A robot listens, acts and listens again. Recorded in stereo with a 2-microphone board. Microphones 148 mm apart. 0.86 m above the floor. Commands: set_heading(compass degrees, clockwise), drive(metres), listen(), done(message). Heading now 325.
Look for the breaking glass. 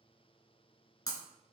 set_heading(300)
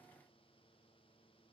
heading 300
listen()
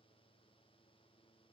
done("I heard breaking glass, but can't make it out now. It was about straight ahead or 130° left.")